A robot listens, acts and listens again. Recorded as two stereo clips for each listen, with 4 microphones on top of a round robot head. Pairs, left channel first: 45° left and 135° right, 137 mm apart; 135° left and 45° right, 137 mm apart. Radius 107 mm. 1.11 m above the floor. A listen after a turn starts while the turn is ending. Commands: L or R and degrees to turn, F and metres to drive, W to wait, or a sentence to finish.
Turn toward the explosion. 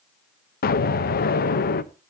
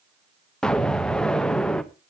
L50
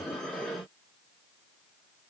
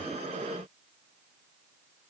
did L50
I heard an explosion from this way, but can't make it out now.